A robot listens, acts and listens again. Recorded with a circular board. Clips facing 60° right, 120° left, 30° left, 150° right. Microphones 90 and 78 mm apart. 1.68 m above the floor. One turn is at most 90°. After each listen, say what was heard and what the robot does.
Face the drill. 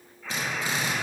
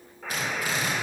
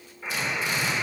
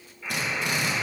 The drill: 125° right. Turn 90° right.
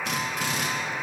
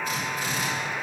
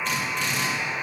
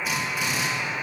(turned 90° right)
The drill is now 70° right. Turn 70° right.
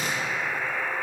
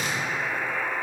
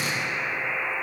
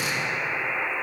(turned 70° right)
The drill is now 10° right. Turn 10° right.
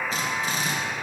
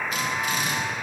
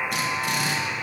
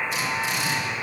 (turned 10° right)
Facing the drill.